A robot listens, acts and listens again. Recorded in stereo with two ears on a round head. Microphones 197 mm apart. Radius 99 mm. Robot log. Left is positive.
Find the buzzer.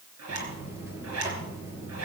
cmd yaw -30
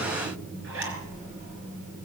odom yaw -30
note: So it is at 140° right.
cmd yaw -140
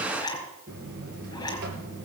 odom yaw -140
note: The buzzer is now 55° right.
cmd yaw -55
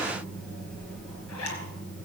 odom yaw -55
end: Found it: a buzzer, straight ahead.